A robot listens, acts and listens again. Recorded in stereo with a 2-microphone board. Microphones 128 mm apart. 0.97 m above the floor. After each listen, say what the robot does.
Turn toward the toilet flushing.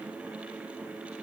Keep listening.
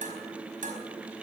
Keep listening.
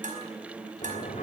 Turn 90° left.
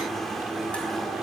Found it: a toilet flushing, straight ahead, 2 to 4 m away.